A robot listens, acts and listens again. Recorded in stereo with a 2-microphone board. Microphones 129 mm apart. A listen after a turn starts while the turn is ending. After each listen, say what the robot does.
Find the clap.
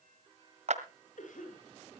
Turn 60° right.
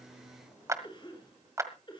Turn 25° right.
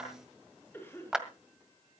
Found it: a clap, straight ahead, 1 to 2 m away.